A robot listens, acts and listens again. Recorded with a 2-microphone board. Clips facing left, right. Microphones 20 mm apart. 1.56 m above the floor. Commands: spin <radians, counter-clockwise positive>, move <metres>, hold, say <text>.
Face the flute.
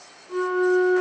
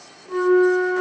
spin -0.79
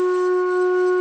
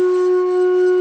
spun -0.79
spin -0.17
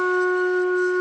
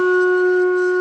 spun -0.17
say Found it: a flute, straight ahead, 1 to 2 m away.